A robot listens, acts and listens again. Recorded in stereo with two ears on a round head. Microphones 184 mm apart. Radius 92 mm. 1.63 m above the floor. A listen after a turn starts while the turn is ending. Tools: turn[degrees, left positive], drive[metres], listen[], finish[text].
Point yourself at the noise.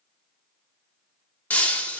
Action: turn[30]
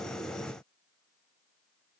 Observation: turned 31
Action: listen[]
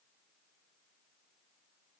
Action: finish[I heard breaking glass, but can't make it out now. It was about 25° right or 140° left.]